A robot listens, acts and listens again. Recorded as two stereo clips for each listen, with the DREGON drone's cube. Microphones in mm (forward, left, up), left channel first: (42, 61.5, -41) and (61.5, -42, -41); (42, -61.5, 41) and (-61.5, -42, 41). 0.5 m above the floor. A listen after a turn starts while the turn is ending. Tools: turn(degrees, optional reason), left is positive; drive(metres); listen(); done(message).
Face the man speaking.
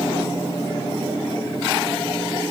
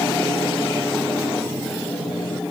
listen()
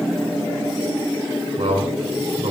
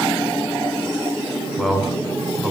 turn(degrees=-105, reason="The man speaking: 105° right.")
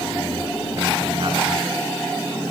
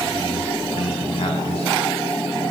listen()
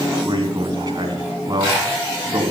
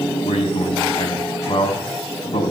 turn(degrees=-30, reason="The man speaking is now 30° right.")
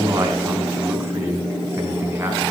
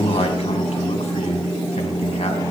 listen()
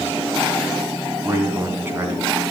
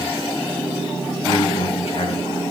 turn(degrees=-10, reason="The man speaking is now 10° right.")
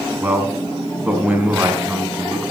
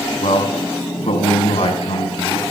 done("Found it: a man speaking, straight ahead.")